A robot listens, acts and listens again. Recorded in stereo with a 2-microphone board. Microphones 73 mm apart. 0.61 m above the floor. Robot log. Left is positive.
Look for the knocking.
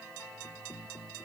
cmd idle
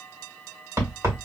note: The knocking: about 45° right or 135° right.
cmd yaw -45
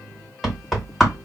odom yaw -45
end: Found it: knocking, straight ahead.